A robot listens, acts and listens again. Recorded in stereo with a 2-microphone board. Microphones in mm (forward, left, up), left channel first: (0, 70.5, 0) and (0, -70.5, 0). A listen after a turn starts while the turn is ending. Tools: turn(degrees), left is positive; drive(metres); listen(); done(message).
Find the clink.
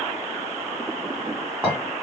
turn(degrees=-30)
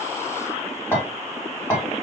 turn(degrees=15)
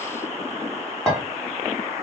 done("Found it: a clink, straight ahead, 1 to 2 m away.")